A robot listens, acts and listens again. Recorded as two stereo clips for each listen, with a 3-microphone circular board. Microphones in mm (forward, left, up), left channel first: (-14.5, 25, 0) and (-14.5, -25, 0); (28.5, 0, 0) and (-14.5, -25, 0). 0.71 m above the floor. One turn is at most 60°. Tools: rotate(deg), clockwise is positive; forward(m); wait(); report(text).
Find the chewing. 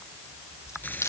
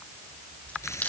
rotate(-60)
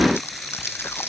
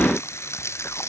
rotate(-55)
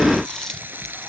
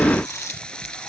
wait()
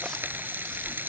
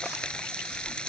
wait()
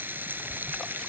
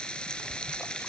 report("I heard chewing from this way, but can't make it out now.")